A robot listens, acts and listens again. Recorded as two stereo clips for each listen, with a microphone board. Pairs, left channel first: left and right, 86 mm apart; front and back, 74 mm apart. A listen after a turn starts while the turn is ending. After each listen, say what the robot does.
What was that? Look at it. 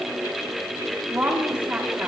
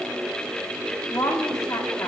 Turn 25° right.
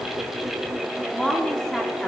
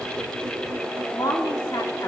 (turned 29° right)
Facing the woman speaking, 2 to 4 m away.